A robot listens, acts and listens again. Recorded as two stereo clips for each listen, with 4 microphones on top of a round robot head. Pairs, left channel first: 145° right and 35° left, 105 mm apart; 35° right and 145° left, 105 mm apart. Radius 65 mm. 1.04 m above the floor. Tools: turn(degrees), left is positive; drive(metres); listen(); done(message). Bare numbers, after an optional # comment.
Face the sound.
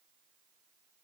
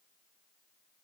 listen()
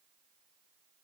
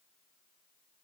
listen()
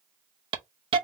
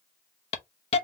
done("Found it: a hiss, straight ahead, under 1 m away.")